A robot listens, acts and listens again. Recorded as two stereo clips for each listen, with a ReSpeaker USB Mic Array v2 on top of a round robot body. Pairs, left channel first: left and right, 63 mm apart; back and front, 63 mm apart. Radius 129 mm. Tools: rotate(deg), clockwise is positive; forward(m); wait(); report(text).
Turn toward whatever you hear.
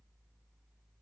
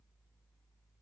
wait()
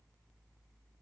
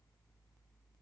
wait()
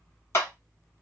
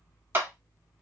rotate(-55)
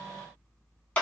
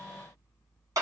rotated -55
rotate(-20)
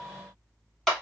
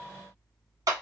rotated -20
report("Facing the clap, 1 to 2 m away.")